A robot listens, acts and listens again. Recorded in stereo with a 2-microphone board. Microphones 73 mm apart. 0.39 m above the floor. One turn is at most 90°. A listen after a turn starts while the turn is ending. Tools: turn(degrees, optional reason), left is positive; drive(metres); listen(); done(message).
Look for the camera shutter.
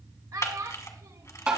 turn(degrees=50, reason="The camera shutter: about 50° left or 130° left.")
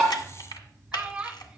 turn(degrees=80, reason="So it is at 80° left.")
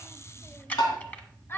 turn(degrees=20, reason="The camera shutter is now 20° left.")
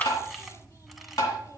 listen()
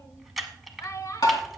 done("Facing the camera shutter.")